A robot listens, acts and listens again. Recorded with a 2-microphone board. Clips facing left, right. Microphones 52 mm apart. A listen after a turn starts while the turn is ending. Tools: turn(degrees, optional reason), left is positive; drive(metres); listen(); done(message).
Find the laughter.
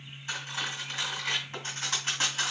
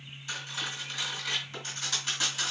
listen()
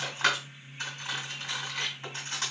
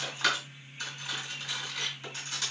listen()
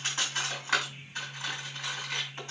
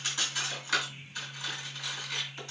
done("I can't make out laughter to turn to.")